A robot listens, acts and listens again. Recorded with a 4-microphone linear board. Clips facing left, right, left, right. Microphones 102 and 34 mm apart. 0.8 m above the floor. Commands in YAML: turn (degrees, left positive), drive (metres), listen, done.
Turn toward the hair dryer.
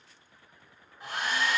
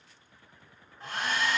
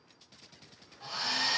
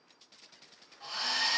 turn: 30
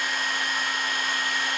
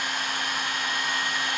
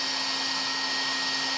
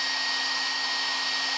turn: -20
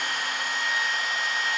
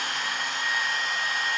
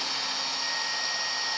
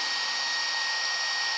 turn: 10
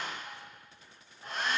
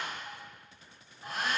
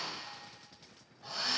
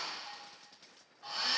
done: "Found it: a hair dryer, straight ahead."